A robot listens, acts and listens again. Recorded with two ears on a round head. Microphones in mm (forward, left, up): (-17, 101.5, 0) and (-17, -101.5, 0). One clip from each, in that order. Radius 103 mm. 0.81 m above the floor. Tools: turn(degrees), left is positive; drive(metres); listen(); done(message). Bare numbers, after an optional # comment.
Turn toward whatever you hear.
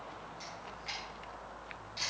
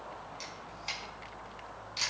# The camera shutter: about 35° right or 145° right.
turn(-35)
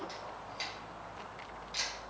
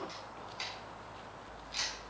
done("Found it: a camera shutter, straight ahead, over 4 m away.")